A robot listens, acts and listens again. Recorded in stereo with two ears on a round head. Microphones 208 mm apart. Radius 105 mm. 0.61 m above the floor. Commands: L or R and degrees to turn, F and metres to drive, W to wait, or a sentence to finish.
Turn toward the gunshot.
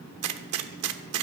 R90
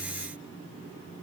I heard a gunshot from this way, but can't make it out now.